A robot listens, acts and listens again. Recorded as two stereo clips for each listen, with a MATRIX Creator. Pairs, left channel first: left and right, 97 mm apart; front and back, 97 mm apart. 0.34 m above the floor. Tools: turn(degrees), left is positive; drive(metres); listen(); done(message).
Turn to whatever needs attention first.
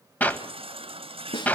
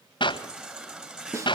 turn(degrees=-100)
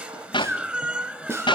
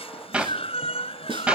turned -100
turn(degrees=-15)
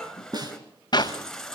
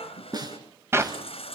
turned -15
done("Facing the baby crying, 1 to 2 m away.")